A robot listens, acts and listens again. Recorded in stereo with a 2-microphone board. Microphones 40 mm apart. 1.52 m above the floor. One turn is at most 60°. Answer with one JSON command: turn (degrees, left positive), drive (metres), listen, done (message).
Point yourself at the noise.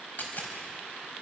{"turn": 45}
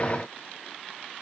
{"listen": true}
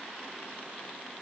{"done": "I heard a dropped coin, but can't make it out now. It was about straight ahead or 90° left."}